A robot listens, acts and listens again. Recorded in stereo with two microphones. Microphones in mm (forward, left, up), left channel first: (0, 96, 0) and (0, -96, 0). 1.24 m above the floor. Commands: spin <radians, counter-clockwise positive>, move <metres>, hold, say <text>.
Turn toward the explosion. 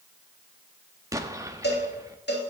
spin -0.26
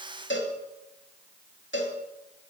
hold
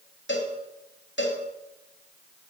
say I heard an explosion, but can't make it out now. It was about straight ahead or 150° right.